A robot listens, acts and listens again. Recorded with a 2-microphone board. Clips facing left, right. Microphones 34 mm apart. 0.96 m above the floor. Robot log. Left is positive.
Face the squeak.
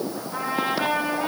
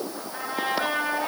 cmd idle
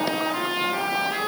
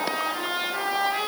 cmd idle
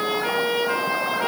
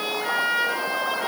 end: I can't make out a squeak, only a trumpet.